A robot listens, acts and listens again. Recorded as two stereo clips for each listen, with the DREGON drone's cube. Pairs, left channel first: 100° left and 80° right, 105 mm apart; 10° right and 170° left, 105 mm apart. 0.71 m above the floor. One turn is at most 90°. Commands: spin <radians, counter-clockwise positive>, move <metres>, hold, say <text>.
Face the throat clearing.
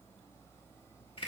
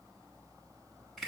hold
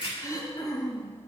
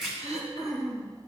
spin 1.57
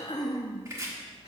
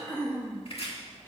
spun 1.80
spin 1.05
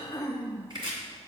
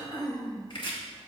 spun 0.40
spin 0.61
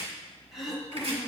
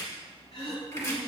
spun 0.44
spin 0.17
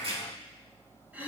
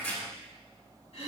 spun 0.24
say Facing the throat clearing.